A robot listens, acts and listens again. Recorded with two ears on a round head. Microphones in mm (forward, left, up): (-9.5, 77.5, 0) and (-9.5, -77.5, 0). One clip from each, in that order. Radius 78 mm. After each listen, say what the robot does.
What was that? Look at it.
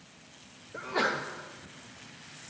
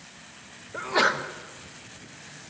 Turn 35° right.
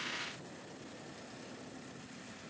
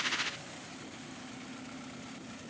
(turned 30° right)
Keep listening.
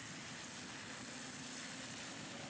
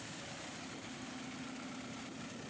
I heard a sneeze, but can't make it out now. It was about 5° right or 115° right.